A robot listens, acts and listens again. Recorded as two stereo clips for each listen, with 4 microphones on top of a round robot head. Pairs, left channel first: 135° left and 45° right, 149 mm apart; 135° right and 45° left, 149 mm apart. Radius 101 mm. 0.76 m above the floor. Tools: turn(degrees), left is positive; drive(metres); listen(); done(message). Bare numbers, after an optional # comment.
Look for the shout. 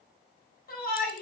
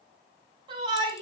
# The shout: 105° left.
turn(105)
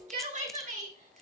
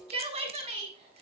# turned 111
done("Facing the shout.")